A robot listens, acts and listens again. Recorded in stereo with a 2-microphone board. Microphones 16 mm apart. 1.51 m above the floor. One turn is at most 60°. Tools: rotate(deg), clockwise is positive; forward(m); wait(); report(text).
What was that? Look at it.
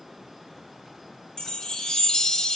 rotate(-60)
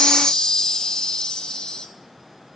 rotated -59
rotate(-50)
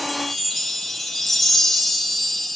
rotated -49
report("Facing the chime, 1 to 2 m away.")